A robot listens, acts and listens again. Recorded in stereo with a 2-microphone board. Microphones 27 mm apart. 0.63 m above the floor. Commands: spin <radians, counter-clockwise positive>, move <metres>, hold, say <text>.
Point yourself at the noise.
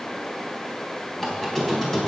spin 0.26
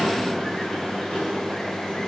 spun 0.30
spin 2.53
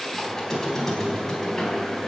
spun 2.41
spin 0.17
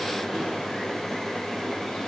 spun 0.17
say Found it: a squeak, straight ahead.